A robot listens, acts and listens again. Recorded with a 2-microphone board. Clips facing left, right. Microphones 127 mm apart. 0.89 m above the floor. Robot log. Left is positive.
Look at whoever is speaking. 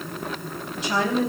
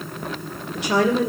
note: The woman speaking: about 75° right or 105° right.
cmd yaw -75
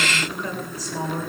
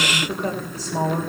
note: So it is at 30° right.
cmd yaw -30
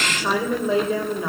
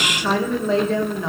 note: The woman speaking is now 10° left.
cmd yaw +10
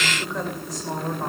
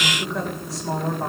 end: Facing the woman speaking.